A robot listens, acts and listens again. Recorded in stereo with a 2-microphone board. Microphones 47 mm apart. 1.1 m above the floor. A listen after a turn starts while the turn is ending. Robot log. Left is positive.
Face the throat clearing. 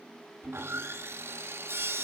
cmd idle
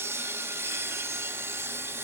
cmd idle
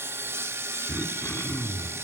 note: The throat clearing: about 50° left or 130° left.
cmd yaw +50
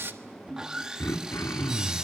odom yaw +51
note: So it is at 80° left.
cmd yaw +80
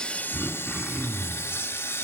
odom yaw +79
end: Facing the throat clearing, 1 to 2 m away.